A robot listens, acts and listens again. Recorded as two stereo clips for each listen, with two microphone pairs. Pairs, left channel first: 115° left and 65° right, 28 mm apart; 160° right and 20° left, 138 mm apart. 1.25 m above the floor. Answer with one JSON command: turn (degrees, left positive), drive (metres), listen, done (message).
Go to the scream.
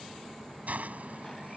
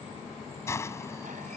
{"listen": true}
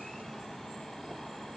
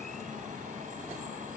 {"listen": true}
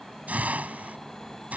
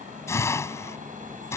{"done": "I can't make out a scream, only a hiss."}